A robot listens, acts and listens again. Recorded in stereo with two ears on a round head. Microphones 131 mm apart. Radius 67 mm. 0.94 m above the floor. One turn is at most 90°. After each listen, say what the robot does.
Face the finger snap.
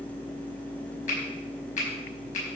Turn 55° left.
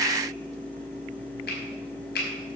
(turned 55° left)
Turn 70° left.
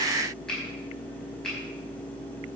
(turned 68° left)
Keep listening.
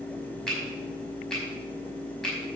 Found it: a finger snap, straight ahead.